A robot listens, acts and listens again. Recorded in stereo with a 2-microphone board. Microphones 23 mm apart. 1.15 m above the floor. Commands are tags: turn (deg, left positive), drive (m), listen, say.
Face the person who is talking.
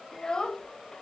<turn deg="25"/>
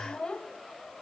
<turn deg="130"/>
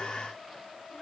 <turn deg="20"/>
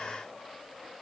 <listen/>
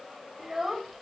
<say>Found it: a child speaking, straight ahead, 1 to 2 m away.</say>